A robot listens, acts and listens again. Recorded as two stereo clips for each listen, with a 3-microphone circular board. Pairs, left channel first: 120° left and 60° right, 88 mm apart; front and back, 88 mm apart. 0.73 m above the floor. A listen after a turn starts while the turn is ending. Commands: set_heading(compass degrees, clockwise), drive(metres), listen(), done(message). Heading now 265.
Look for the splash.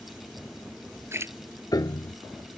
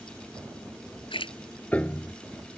done("Found it: a splash, straight ahead.")